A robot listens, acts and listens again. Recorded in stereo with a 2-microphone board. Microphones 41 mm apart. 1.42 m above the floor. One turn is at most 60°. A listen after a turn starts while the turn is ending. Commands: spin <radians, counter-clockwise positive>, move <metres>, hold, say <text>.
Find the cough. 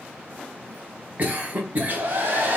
spin -0.70
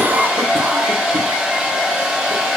hold
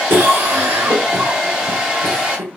spin -1.05
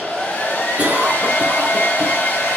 spin -0.61
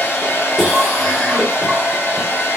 say Found it: a cough, straight ahead.